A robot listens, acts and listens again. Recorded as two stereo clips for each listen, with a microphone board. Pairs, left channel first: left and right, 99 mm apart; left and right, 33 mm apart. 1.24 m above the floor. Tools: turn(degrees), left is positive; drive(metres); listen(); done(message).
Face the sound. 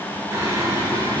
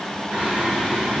turn(degrees=-35)
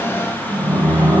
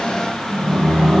turn(degrees=-20)
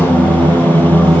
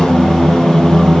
turn(degrees=-20)
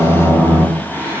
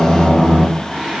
turn(degrees=-25)
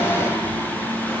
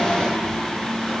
listen()
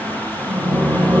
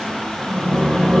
turn(degrees=-30)
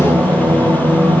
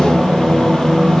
turn(degrees=-15)
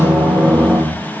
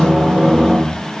done("Facing the singing.")